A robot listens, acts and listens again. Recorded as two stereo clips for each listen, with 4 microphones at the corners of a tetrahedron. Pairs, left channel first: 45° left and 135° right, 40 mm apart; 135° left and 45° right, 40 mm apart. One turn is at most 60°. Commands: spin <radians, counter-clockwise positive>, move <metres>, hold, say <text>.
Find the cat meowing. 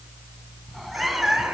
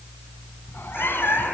spin 1.05
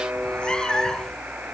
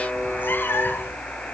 spin 1.05
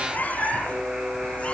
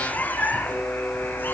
spin 1.05
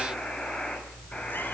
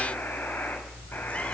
spin 0.61
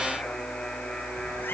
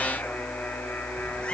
hold
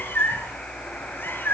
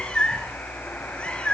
spin 1.05
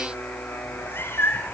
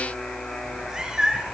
spin 0.52
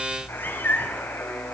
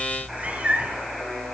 spin 0.17
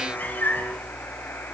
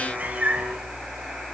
say Found it: a cat meowing, straight ahead.